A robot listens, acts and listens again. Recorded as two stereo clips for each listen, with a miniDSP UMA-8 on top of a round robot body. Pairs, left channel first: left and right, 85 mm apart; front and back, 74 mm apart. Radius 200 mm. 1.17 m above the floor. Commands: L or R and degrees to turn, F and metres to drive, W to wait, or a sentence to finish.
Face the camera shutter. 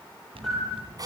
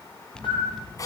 Facing the camera shutter, over 4 m away.